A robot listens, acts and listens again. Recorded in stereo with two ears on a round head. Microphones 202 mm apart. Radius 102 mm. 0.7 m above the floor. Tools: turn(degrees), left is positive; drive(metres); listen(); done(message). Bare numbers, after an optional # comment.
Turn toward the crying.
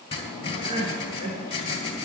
# The crying: about 20° right or 160° right.
turn(-20)
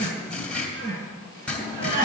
# So it is at 140° right.
turn(-140)
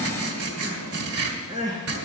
# The crying is now 20° right.
turn(-20)
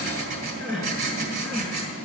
done("Facing the crying.")